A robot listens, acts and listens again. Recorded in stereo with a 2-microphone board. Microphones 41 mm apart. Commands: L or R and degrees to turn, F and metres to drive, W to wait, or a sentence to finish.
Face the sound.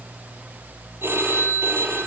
R65
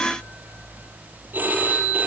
R50
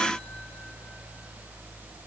W
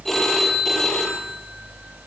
Facing the phone ringing, over 4 m away.